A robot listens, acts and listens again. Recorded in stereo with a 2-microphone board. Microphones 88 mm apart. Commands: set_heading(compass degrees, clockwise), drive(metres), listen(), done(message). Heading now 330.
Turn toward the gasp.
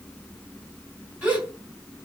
set_heading(0)
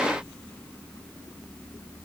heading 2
listen()
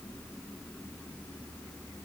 done("I heard a gasp, but can't make it out now. It was about 20° left or 135° right.")